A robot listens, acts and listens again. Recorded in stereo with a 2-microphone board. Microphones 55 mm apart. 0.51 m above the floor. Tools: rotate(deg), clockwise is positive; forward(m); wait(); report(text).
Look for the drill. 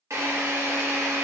rotate(70)
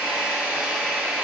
rotate(25)
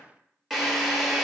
report("Facing the drill.")